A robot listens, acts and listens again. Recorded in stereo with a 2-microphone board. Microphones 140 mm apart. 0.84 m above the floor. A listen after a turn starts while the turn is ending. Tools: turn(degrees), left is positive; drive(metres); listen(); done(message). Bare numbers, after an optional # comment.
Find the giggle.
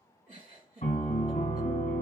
# The giggle: about 65° right or 115° right.
turn(-65)
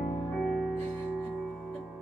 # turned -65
listen()
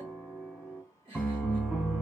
# So it is at 45° right.
turn(-45)
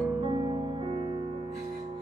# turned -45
listen()
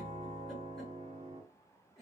done("Found it: a giggle, straight ahead.")